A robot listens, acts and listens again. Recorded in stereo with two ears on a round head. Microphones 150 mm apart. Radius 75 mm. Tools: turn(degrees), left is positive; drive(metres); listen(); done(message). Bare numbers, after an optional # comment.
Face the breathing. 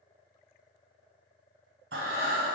turn(-90)
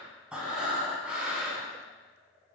done("Found it: breathing, straight ahead.")